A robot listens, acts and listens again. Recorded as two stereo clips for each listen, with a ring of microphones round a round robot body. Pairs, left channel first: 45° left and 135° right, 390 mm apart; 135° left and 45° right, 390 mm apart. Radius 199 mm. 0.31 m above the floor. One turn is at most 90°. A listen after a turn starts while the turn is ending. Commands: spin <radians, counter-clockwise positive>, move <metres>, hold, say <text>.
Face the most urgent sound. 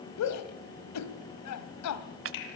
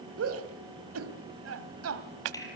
say Found it: a shout, straight ahead.